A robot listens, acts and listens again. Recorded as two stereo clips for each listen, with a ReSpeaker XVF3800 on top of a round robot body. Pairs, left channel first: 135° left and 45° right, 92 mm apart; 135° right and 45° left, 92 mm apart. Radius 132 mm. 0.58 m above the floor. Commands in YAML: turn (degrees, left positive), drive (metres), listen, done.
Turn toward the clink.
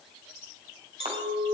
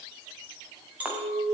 turn: -30
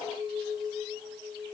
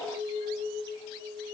done: "Found it: a clink, straight ahead."